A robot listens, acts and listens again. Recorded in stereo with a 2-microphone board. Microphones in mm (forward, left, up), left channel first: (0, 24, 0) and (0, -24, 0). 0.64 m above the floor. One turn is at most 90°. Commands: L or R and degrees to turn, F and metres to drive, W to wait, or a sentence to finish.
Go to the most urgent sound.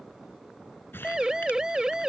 R30
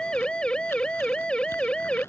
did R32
L20
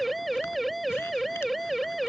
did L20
F1.0
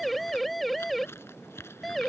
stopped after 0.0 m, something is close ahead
Something is in my way. I am facing the siren but have not reached it.